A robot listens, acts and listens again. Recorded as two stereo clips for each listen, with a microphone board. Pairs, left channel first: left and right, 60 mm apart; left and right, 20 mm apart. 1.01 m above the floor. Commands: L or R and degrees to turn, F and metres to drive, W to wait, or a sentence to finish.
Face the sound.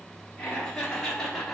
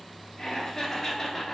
L30
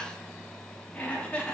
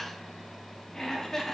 L20
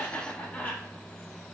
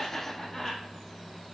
L155
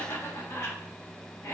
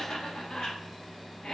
L60
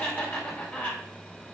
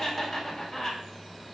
L25
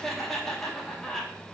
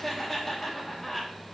Facing the laughter, 1 to 2 m away.